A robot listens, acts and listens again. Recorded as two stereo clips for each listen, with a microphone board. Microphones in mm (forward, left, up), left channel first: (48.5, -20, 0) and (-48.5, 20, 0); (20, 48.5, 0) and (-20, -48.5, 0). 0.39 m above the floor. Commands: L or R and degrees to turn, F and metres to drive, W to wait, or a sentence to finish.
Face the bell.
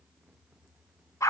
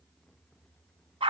W
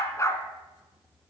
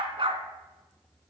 W
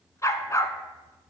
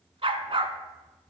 I can't make out a bell to turn to.